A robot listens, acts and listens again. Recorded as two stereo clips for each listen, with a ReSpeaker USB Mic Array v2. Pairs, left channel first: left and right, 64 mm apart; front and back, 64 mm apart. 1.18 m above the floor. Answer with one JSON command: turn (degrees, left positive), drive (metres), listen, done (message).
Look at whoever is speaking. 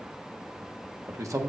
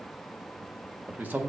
{"turn": -120}
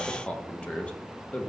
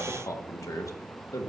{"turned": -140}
{"turn": 20}
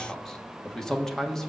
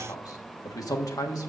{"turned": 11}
{"turn": 10}
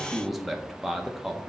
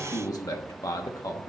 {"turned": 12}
{"done": "Found it: a man speaking, straight ahead, 1 to 2 m away."}